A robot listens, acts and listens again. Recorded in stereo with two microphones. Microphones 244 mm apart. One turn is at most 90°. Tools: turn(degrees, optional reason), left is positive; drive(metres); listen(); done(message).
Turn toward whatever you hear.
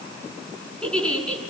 turn(degrees=30)
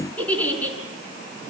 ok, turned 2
turn(degrees=30)
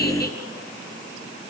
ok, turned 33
listen()
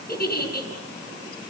turn(degrees=90, reason="So it is at 140° left.")
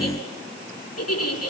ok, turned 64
turn(degrees=80, reason="The giggle is now 80° left.")
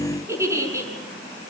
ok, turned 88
turn(degrees=-10, reason="The giggle is now 10° right.")
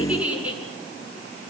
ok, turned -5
done("Facing the giggle.")